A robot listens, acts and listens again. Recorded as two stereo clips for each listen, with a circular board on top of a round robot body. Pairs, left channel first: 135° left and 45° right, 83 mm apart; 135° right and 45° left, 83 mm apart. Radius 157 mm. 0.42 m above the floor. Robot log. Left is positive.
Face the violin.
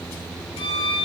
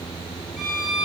note: The violin: 135° left.
cmd yaw +135
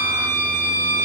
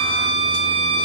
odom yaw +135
note: The violin is now 20° left.
cmd yaw +20
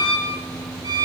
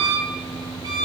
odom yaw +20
end: Facing the violin, 1 to 2 m away.